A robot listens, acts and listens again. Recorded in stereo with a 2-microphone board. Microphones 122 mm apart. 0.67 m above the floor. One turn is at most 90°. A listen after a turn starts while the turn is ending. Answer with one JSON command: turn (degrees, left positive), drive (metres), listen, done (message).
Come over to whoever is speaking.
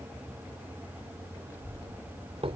{"turn": 25}
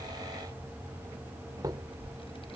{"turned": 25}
{"turn": 90}
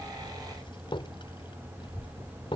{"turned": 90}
{"turn": 45}
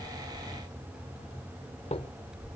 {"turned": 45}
{"drive": 1.0}
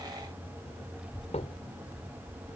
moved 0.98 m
{"drive": 1.0}
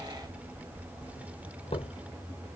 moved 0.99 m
{"turn": -10}
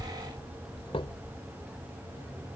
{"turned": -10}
{"drive": 1.0}
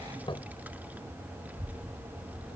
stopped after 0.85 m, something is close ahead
{"turn": -15}
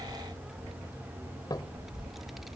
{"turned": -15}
{"done": "I am next to the child speaking."}